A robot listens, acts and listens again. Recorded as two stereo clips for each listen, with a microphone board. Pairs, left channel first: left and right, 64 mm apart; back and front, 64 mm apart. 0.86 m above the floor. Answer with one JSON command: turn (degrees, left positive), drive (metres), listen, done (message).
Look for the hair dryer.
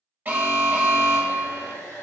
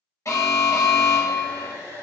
{"turn": 30}
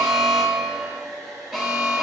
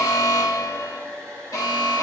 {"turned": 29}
{"done": "Found it: a hair dryer, straight ahead, 1 to 2 m away."}